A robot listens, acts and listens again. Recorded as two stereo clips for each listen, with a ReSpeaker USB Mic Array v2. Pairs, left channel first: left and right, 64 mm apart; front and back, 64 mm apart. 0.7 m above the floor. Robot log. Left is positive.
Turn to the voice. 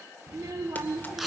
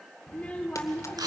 note: The child speaking: 70° right.
cmd yaw -70
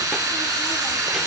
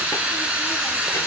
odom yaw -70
cmd idle
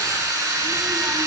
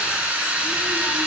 cmd idle
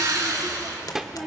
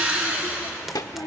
end: Facing the child speaking.